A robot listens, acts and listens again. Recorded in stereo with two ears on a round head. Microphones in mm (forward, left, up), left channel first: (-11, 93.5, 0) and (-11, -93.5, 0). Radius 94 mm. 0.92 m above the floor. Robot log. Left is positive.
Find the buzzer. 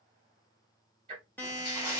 cmd yaw +30
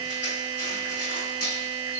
note: So it is at 20° right.
cmd yaw -20
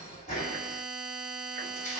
end: Found it: a buzzer, straight ahead.